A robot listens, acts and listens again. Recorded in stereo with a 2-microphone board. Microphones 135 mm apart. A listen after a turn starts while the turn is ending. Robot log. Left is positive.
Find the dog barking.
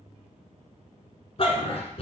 note: The dog barking: about 50° left or 130° left.
cmd yaw +50
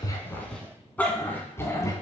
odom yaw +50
note: So it is at 25° left.
cmd yaw +25
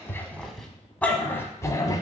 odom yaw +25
note: The dog barking is now 30° left.
cmd yaw +30
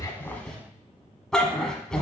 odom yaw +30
end: Facing the dog barking, 1 to 2 m away.